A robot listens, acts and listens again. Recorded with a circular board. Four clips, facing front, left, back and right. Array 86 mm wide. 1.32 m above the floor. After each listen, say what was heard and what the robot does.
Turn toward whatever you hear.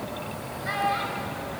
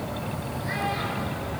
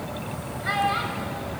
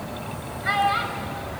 The child speaking: 110° right. Turn 110° right.
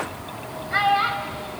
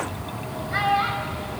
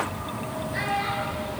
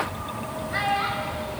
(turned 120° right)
The child speaking is now 10° left. Turn 10° left.
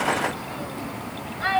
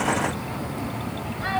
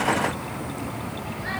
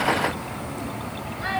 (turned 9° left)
Facing the child speaking, over 4 m away.